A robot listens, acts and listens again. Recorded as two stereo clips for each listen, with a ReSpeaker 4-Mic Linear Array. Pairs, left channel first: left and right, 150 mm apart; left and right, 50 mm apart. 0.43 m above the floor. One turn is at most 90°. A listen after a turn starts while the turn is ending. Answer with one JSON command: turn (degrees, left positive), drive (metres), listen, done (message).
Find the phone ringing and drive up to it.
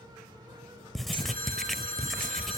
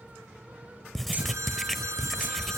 {"turn": -75}
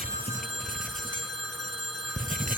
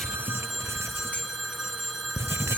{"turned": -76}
{"drive": 1.0}
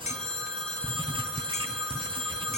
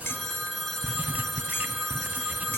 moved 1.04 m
{"drive": 1.0}
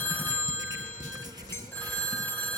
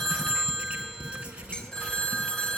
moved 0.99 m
{"turn": 10}
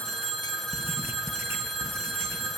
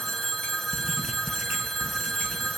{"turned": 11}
{"drive": 1.0}
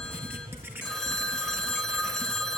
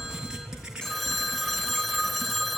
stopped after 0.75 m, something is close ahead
{"done": "Arrived at the phone ringing, straight ahead."}